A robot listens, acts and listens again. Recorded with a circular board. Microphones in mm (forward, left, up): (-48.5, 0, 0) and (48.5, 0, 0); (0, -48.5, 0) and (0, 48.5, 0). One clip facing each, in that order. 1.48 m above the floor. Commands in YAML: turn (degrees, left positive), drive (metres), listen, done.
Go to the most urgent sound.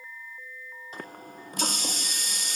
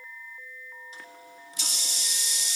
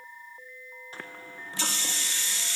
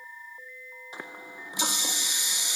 listen: true
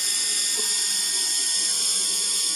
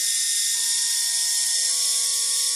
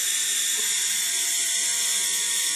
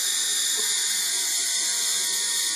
listen: true
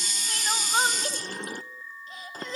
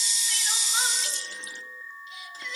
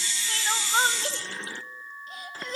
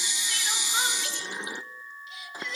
turn: -135
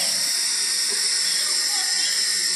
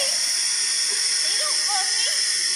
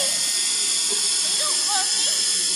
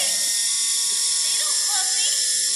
listen: true
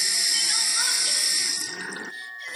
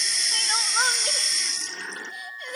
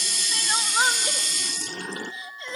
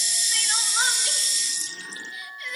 turn: -30
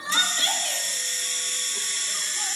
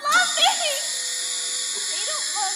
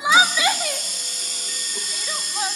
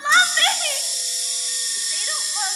turn: -10
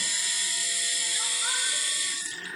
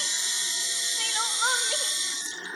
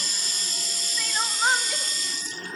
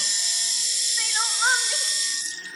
drive: 1.0
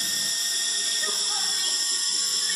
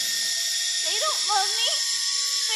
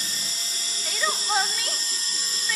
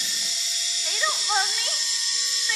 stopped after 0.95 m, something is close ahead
done: "I am next to the crying."